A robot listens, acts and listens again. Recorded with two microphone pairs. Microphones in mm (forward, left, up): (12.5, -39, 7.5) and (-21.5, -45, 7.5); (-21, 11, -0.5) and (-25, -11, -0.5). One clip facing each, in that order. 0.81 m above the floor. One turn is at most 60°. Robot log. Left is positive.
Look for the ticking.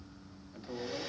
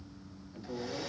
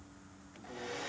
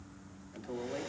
cmd idle
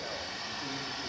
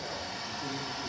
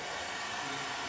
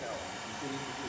cmd idle
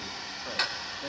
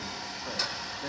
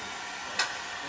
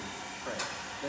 note: The ticking: 45° left.
cmd yaw +45
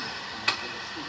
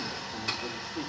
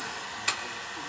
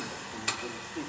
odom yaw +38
end: Found it: ticking, straight ahead, under 1 m away.